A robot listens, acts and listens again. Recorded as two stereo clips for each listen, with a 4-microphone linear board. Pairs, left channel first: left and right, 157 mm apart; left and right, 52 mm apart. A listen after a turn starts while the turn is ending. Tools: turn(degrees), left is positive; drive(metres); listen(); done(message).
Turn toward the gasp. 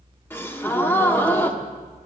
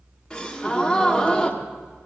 turn(degrees=30)
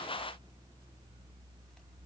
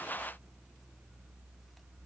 listen()
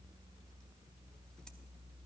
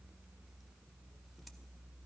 done("I heard a gasp, but can't make it out now. It was about 15° right or 135° left.")